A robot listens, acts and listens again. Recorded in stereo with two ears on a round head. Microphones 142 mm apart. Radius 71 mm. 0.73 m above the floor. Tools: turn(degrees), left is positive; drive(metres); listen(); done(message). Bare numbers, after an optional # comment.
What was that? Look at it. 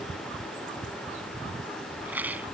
turn(-30)
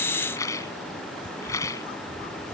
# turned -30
# So it is at 20° left.
turn(20)
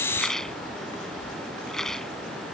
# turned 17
done("Facing the rattle.")